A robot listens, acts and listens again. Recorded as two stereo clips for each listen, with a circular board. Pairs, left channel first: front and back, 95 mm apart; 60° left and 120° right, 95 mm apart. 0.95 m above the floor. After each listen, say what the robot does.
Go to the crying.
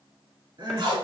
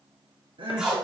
Turn 140° right.
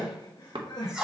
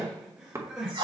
Turn 40° right.
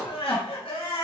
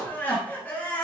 Turn 10° right.
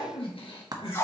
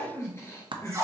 Drive 1.0 m forward.
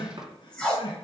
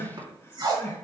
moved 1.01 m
Drive 1.0 m forward.
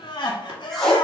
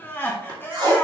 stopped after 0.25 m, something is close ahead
Arrived at the crying, straight ahead.